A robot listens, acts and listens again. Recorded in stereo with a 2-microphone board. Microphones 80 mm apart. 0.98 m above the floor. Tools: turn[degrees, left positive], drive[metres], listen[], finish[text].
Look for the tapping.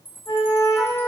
Action: listen[]
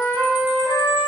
Action: listen[]
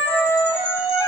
Action: finish[I can't make out tapping, only a flute and a chime.]